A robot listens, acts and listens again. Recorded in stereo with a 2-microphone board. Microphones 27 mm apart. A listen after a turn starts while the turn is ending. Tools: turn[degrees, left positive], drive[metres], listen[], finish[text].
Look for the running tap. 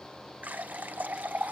Action: turn[-90]
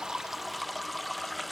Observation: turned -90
Action: finish[Found it: a running tap, straight ahead.]